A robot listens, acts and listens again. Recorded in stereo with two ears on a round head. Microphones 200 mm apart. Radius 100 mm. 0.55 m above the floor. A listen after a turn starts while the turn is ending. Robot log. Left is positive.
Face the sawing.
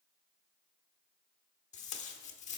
cmd idle
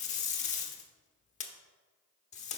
cmd idle
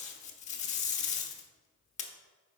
end: I can't make out sawing to turn to.